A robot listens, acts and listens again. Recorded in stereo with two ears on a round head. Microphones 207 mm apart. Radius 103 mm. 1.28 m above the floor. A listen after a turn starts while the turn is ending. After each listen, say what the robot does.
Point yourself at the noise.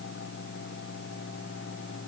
Keep listening.
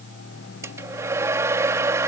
Turn 30° right.
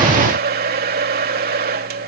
Turn 135° right.
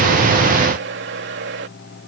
Turn 55° right.
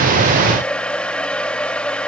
Facing the hair dryer.